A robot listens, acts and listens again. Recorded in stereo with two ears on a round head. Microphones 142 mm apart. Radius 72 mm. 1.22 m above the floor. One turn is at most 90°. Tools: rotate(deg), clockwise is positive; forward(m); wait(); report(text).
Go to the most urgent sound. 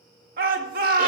rotate(60)
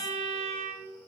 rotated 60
wait()
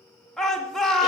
forward(1.0)
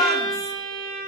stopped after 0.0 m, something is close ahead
report("Blocked. The shout is further on, straight ahead.")